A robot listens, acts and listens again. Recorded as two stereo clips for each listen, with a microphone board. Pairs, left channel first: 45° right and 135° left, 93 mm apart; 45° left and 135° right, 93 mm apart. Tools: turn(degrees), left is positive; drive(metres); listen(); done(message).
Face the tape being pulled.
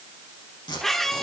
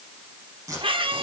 turn(degrees=-80)
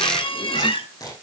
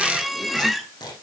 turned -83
done("Facing the tape being pulled.")